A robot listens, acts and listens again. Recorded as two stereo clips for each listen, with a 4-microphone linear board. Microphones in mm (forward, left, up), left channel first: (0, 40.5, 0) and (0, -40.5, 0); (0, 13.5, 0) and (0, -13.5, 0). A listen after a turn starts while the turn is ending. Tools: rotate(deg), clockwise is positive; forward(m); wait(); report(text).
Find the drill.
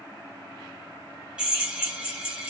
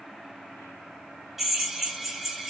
rotate(30)
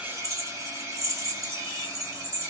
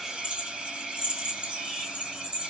rotate(135)
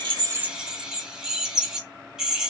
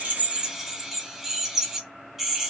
report("Found it: a drill, straight ahead, 1 to 2 m away.")